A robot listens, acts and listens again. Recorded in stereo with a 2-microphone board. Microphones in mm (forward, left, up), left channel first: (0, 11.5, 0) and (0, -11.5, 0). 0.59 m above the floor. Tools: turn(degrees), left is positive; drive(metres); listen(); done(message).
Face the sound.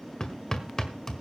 turn(degrees=30)
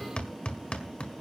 turn(degrees=120)
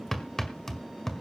turn(degrees=15)
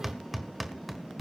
done("Found it: hammering, straight ahead.")